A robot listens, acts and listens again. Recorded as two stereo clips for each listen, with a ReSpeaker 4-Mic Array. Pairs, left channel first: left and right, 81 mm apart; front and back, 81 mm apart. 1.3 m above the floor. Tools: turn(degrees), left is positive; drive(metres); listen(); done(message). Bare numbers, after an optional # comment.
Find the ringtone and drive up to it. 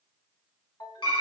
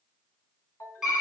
# The ringtone: 50° left.
turn(50)
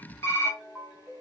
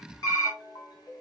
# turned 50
# The ringtone is now 10° right.
turn(-10)
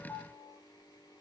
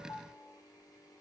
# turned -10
drive(1.0)
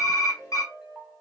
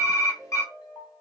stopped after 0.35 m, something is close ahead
# The ringtone is now 10° right.
turn(-10)
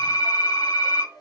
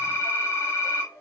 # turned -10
done("Blocked. The ringtone is further on, straight ahead.")